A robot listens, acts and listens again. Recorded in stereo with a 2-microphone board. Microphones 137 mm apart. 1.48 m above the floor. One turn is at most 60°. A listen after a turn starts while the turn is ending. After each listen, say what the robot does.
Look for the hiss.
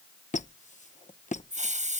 Turn 60° right.
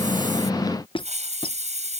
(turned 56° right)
Turn 60° right.
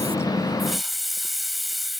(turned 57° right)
Found it: a hiss, straight ahead.